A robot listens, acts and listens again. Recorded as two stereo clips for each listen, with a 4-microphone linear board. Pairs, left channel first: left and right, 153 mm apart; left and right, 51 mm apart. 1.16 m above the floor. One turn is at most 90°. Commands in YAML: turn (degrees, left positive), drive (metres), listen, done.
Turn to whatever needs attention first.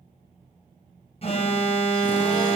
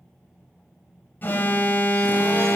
turn: 40
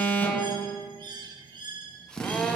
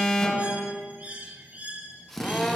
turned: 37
turn: 15
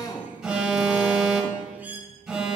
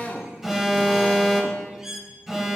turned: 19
done: "Facing the alarm."